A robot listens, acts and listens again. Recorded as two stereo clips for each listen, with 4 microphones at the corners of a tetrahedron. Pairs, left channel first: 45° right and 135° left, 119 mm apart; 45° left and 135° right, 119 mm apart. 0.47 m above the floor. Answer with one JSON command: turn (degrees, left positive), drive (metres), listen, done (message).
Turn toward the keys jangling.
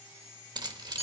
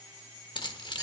{"turn": 90}
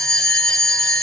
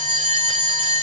{"listen": true}
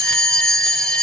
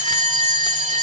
{"listen": true}
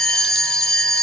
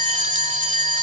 {"done": "Facing where the keys jangling came from. I can't hear it now."}